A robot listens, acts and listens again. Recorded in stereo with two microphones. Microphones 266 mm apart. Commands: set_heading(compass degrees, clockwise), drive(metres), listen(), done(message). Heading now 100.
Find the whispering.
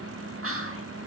set_heading(155)
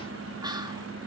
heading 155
set_heading(175)
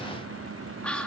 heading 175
done("Facing the whispering, 1 to 2 m away.")